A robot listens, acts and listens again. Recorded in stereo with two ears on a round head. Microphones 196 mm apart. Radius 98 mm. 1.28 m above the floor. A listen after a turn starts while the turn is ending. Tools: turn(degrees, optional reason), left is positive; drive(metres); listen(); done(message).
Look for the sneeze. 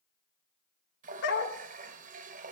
listen()
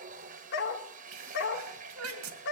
turn(degrees=-90)
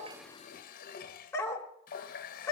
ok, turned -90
done("Facing where the sneeze came from. I can't hear it now.")